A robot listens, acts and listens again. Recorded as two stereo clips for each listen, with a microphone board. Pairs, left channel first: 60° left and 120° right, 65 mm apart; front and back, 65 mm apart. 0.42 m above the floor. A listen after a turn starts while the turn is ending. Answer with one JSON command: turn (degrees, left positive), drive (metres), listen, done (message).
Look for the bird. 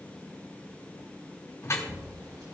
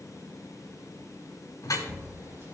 {"turn": -125}
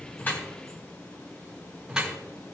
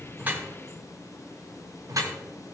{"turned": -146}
{"turn": 20}
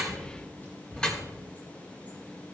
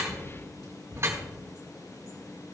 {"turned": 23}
{"done": "Facing the bird, over 4 m away."}